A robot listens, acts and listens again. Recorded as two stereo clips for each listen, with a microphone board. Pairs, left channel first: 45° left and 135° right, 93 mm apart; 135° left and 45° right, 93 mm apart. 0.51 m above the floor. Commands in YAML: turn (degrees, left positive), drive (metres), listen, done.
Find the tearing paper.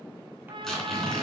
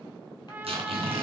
turn: -40
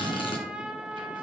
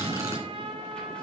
turn: 20
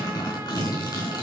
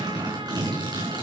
done: "Facing the tearing paper, 2 to 4 m away."